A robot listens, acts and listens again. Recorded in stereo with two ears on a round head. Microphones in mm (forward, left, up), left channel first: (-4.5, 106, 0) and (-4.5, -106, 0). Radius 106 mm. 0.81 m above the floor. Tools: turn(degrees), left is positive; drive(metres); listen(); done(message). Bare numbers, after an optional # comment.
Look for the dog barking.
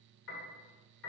listen()
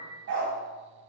# The dog barking: about 45° right or 135° right.
turn(-45)
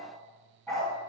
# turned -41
done("Found it: a dog barking, straight ahead, 2 to 4 m away.")